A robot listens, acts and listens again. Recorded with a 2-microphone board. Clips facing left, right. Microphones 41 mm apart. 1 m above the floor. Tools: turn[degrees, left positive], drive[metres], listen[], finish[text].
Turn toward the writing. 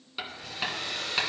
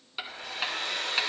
Action: turn[-30]
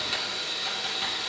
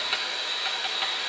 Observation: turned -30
Thought: So it is at 145° right.
Action: turn[-145]
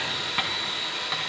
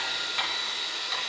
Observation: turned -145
Thought: The writing is now 30° left.
Action: turn[30]
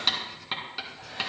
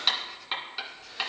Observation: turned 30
Action: finish[Found it: writing, straight ahead.]